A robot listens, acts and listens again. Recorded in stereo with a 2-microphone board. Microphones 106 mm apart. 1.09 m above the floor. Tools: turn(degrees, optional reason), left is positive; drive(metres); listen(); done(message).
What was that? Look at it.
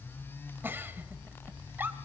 turn(degrees=-20, reason="The giggle: about 20° right or 160° right.")
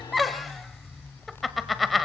done("Found it: a giggle, straight ahead, 1 to 2 m away.")